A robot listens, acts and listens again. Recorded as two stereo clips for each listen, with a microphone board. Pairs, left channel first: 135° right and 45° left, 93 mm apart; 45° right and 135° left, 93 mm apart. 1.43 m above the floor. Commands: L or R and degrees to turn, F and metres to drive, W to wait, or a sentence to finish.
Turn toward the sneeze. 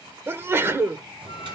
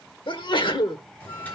R20
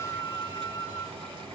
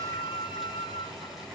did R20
I heard a sneeze from this way, but can't make it out now.